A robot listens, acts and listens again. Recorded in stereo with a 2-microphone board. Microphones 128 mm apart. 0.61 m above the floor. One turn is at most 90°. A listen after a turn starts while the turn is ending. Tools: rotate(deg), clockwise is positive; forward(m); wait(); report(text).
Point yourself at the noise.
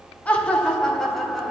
rotate(-30)
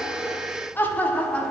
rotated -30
rotate(-30)
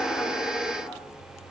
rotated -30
wait()
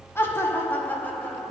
rotate(-30)
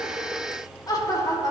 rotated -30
rotate(-90)
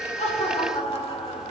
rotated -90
rotate(-50)
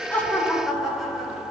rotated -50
report("Found it: laughter, straight ahead.")